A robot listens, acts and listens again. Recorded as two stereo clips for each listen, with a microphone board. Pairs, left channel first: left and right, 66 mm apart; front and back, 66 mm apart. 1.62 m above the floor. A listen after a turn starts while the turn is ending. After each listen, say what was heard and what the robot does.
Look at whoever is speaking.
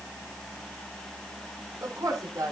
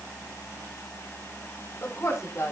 The woman speaking: 55° right. Turn 55° right.
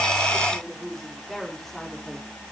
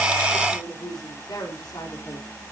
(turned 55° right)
Found it: a woman speaking, straight ahead.